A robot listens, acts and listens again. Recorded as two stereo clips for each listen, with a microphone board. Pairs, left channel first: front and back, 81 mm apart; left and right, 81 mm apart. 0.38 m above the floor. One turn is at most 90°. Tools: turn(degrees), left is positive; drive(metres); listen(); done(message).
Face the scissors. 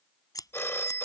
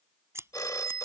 turn(degrees=-35)
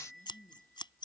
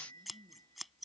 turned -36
done("Facing the scissors.")